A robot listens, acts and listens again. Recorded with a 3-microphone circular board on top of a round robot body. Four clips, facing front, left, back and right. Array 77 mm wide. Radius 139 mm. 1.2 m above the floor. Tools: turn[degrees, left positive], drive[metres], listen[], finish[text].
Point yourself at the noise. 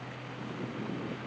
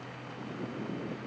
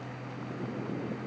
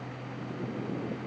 Action: listen[]
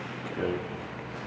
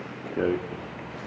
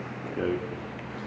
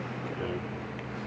Thought: The rattle: 105° left.
Action: turn[105]
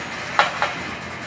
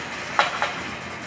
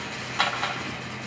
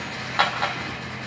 Thought: The rattle is now 25° left.
Action: turn[25]
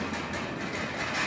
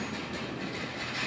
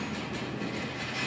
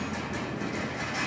Thought: The rattle is now 15° right.
Action: turn[-15]
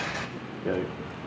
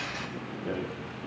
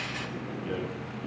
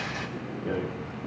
Action: finish[Found it: a rattle, straight ahead.]